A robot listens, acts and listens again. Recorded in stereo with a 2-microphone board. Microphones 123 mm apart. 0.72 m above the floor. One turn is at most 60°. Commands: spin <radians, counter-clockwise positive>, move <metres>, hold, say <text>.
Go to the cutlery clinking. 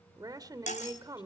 spin 1.05
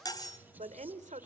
spin 0.52
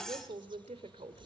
move 1.0
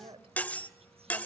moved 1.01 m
spin 0.17
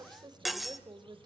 move 1.0
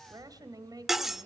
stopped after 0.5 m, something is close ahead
say Arrived at the cutlery clinking, straight ahead.